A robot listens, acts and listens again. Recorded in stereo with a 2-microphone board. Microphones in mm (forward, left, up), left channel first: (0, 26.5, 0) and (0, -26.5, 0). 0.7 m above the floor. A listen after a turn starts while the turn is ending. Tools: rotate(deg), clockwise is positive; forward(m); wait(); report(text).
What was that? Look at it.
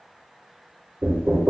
rotate(35)
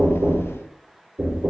rotate(105)
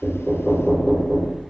report("Found it: knocking, straight ahead.")